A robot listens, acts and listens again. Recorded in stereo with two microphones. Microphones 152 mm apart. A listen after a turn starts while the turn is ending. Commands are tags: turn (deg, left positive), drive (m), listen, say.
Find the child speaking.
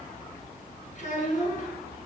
<turn deg="55"/>
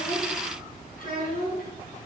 <turn deg="60"/>
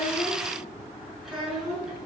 <say>Facing the child speaking, over 4 m away.</say>